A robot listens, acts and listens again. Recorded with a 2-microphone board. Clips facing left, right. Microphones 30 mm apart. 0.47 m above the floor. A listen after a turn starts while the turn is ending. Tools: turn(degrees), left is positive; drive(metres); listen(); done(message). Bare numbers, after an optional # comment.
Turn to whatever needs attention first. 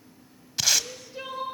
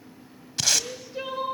turn(-30)
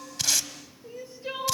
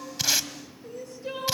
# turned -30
# So it is at 25° left.
turn(25)
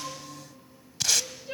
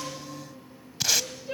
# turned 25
done("Facing the crying.")